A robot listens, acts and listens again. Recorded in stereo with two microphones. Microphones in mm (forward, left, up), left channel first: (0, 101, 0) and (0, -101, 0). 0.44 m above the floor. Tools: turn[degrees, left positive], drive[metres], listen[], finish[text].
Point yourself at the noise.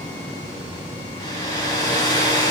Thought: The hair dryer: about 20° left or 160° left.
Action: turn[20]
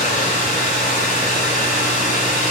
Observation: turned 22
Thought: So it is at 140° left.
Action: turn[140]
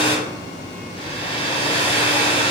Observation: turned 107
Thought: The hair dryer is now 30° left.
Action: turn[30]
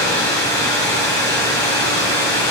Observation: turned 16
Thought: The hair dryer is now 15° left.
Action: turn[15]
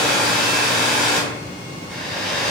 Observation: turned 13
Action: finish[Facing the hair dryer.]